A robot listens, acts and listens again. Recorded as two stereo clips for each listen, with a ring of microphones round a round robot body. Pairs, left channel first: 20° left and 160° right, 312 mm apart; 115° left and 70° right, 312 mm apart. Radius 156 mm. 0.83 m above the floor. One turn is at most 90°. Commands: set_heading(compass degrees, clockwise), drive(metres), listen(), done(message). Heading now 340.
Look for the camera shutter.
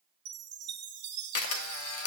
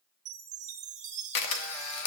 set_heading(270)
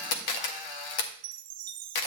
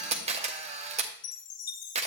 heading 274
done("Found it: a camera shutter, straight ahead.")